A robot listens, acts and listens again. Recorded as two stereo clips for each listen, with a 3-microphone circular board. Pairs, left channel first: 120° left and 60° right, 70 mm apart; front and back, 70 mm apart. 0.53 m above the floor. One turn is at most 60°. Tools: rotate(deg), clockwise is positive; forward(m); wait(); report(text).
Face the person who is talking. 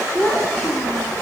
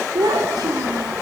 rotate(-60)
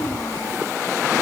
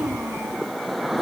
rotate(-60)
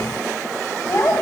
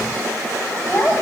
rotate(-60)
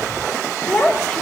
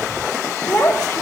rotate(-45)
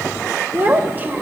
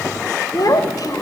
report("Facing the child speaking.")